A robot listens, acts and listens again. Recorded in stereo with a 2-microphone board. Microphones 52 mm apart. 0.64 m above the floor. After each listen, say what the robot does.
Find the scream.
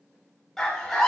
Turn 30° left.
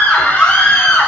Turn 140° left.
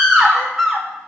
Found it: a scream, straight ahead.